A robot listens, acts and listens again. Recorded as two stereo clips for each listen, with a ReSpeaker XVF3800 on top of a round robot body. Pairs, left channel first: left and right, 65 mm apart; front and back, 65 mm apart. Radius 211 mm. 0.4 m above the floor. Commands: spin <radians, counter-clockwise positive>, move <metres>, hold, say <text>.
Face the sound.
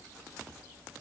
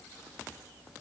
hold
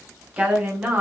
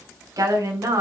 spin -2.62
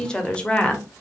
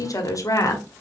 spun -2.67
spin 0.44
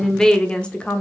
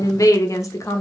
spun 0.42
spin 0.44
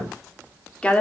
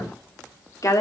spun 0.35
spin 0.44
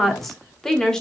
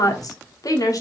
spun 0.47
spin 0.17
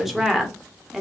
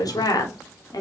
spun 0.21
say Facing the woman speaking.